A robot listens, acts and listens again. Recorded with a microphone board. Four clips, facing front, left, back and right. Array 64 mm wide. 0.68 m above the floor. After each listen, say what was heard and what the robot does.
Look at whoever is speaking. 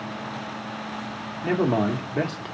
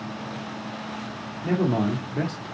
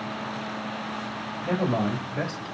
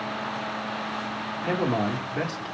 The man speaking: 15° right. Turn 15° right.
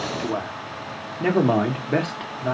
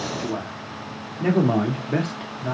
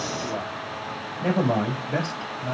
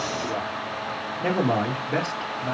Found it: a man speaking, straight ahead, 1 to 2 m away.